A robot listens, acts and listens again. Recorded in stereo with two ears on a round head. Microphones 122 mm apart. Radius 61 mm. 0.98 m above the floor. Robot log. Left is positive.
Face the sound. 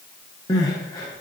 note: The crying: about 25° left or 155° left.
cmd yaw +25
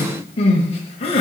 note: So it is at 120° left.
cmd yaw +120
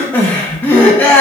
note: The crying is now 15° left.
cmd yaw +15
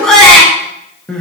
end: Facing the crying, 1 to 2 m away.